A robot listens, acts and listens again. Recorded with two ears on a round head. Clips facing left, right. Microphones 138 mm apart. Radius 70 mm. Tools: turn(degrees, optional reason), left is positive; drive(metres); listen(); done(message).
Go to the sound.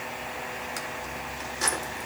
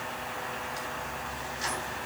listen()
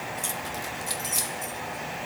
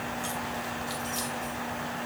turn(degrees=65, reason="The keys jangling: about 65° left or 115° left.")
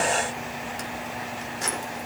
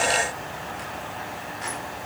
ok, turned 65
turn(degrees=50, reason="So it is at 50° left.")
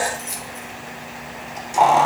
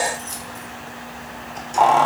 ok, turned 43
drive(metres=1.0)
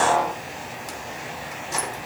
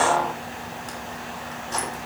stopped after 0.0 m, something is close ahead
turn(degrees=10, reason="The keys jangling is now 10° left.")
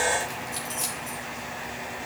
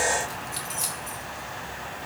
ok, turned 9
done("Something is in my way. I am facing the keys jangling but have not reached it.")